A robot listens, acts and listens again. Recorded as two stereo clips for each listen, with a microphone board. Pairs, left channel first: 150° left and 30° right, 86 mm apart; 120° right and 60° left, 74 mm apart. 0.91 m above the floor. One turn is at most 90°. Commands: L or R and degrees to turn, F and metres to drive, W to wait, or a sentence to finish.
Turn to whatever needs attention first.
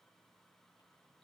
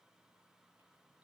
W
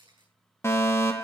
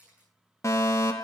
R90
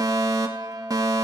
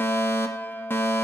R65
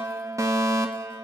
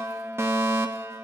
L15
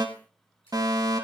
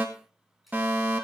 Found it: a fire alarm, straight ahead, 2 to 4 m away.